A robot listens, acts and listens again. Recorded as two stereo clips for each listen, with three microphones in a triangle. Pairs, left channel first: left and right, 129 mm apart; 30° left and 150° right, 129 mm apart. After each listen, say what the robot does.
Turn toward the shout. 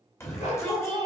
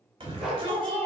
Turn 160° left.
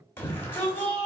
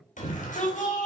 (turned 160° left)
Turn 20° left.
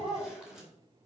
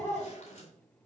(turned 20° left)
Keep listening.
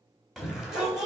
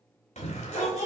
Found it: a shout, straight ahead, over 4 m away.